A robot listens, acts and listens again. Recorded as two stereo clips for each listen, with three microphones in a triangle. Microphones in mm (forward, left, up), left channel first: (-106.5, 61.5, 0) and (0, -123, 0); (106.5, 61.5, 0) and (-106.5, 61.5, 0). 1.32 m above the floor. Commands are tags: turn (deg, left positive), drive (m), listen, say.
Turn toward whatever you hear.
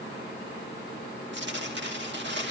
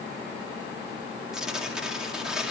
<turn deg="-95"/>
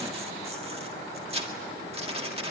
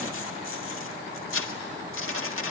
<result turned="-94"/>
<say>Found it: tearing paper, straight ahead.</say>